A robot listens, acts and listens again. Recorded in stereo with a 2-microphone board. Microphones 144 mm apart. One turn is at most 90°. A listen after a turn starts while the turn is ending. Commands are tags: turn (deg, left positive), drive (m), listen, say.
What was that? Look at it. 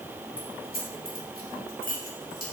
<turn deg="90"/>
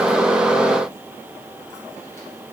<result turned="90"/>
<listen/>
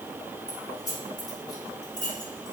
<turn deg="30"/>
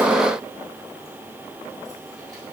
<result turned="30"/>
<listen/>
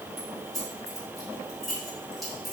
<say>Found it: keys jangling, straight ahead, over 4 m away.</say>